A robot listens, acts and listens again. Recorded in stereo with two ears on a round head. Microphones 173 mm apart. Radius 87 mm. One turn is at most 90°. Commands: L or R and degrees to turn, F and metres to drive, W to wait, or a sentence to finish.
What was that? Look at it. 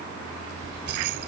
R60
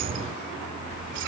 R60
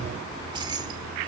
R25
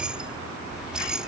Found it: keys jangling, straight ahead.